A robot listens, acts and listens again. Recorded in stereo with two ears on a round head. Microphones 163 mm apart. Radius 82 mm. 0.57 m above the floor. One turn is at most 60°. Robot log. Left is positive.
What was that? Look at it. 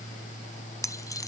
note: The keys jangling: about 20° left or 160° left.
cmd yaw +20
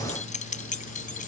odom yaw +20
note: So it is at 135° left.
cmd yaw +60
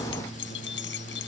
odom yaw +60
note: The keys jangling is now 70° left.
cmd yaw +60
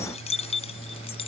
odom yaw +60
note: The keys jangling is now 35° left.
cmd yaw +35
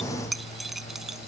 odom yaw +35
end: Found it: keys jangling, straight ahead.